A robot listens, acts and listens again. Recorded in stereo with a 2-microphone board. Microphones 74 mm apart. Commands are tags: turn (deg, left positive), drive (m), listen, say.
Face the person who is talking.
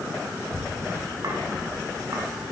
<turn deg="60"/>
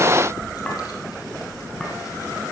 <turn deg="50"/>
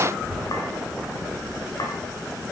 <say>Found it: a child speaking, straight ahead.</say>